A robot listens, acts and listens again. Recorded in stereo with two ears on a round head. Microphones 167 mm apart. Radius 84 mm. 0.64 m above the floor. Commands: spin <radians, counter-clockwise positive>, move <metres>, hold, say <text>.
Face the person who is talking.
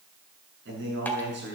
spin -1.22
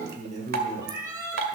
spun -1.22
spin -0.70
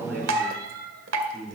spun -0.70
say Facing the man speaking.